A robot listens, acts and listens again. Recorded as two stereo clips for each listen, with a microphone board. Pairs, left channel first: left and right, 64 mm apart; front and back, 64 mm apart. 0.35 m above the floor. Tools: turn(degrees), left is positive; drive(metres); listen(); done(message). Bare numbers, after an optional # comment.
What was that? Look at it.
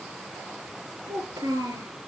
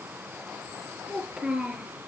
# The child speaking: 105° right.
turn(-105)
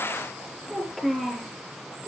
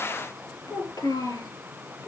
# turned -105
done("Found it: a child speaking, straight ahead, over 4 m away.")